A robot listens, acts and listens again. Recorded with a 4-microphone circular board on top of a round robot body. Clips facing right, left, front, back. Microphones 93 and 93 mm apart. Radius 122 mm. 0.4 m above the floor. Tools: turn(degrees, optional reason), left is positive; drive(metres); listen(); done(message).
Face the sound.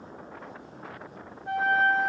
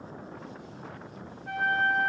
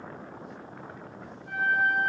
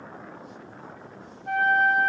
turn(degrees=-150, reason="The flute: 150° right.")
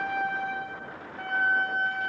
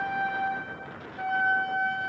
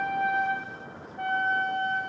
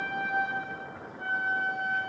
turn(degrees=10, reason="The flute is now 10° left.")
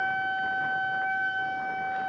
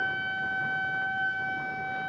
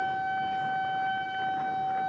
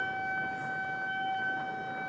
done("Found it: a flute, straight ahead.")